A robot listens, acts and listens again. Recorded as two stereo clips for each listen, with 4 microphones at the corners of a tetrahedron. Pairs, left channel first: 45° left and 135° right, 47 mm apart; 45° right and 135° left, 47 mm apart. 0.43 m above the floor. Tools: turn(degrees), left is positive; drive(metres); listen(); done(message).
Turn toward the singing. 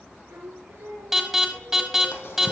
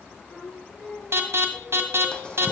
turn(degrees=-100)
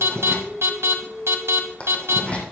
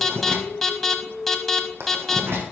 turn(degrees=-25)
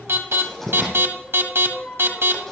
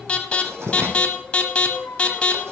turn(degrees=-10)
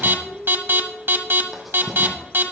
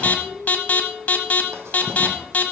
done("Facing the singing, over 4 m away.")